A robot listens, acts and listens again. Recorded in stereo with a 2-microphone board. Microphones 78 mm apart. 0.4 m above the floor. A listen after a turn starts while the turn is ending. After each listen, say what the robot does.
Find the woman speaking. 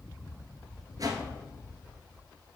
Keep listening.
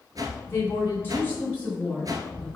Turn 25° left.
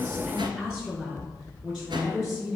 Facing the woman speaking, over 4 m away.